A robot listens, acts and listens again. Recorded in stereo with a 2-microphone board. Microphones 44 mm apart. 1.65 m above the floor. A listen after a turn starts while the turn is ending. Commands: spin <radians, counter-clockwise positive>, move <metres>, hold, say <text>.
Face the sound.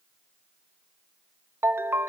spin -0.96
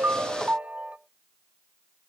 spin -0.61
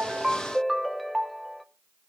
say Found it: a ringtone, straight ahead, 1 to 2 m away.